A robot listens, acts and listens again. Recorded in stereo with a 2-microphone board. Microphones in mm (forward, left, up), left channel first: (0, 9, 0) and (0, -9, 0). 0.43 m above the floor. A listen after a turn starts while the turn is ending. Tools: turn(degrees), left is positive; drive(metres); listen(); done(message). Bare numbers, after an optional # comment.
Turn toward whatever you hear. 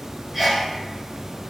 turn(-30)
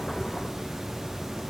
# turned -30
listen()
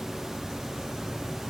done("I heard a sneeze, but can't make it out now. It was about 25° left or 145° right.")